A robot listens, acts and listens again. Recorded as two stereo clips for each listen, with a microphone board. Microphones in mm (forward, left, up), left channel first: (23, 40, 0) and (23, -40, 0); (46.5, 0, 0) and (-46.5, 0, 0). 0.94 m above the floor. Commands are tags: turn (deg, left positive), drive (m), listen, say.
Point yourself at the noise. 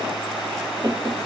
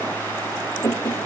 <turn deg="-55"/>
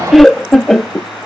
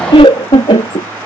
<say>Facing the laughter.</say>